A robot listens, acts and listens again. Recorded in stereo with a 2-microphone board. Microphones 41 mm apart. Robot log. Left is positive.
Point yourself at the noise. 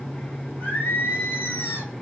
note: The singing: about 55° left or 125° left.
cmd yaw +55
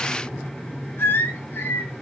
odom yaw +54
note: So it is at 70° left.
cmd yaw +70
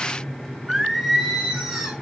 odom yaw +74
end: Found it: singing, straight ahead.